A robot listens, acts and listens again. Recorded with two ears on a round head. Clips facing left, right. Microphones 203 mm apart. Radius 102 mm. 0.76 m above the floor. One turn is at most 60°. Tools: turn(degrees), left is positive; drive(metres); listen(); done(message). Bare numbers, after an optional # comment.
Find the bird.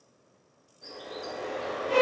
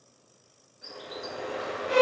# The bird: about 20° right or 160° right.
turn(-20)
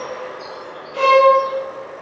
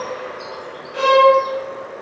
# So it is at 140° right.
turn(-60)
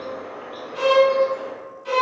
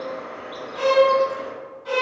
# The bird is now 80° right.
turn(-60)
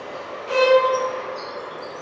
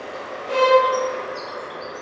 # The bird is now 25° right.
turn(-25)
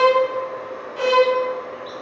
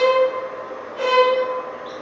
done("Found it: a bird, straight ahead.")